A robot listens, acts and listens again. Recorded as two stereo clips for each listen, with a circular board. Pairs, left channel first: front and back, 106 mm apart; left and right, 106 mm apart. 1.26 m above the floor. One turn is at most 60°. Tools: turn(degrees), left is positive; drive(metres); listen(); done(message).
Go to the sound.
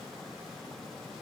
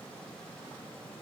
listen()
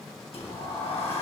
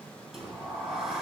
drive(metres=1.0)
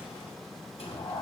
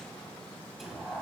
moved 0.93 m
drive(metres=1.0)
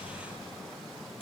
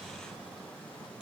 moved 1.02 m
turn(degrees=-10)
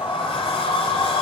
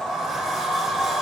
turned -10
drive(metres=1.0)
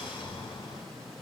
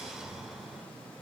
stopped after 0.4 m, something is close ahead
done("Arrived at the sliding door, straight ahead.")